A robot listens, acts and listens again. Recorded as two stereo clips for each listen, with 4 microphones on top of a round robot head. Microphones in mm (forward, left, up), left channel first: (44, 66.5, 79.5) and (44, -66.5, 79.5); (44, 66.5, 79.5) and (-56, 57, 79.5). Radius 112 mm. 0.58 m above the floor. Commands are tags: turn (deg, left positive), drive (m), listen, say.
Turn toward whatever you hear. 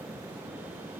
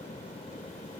<listen/>
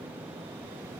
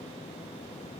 <listen/>
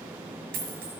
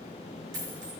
<turn deg="-115"/>
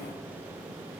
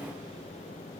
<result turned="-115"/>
<say>I heard a dropped coin from this way, but can't make it out now.</say>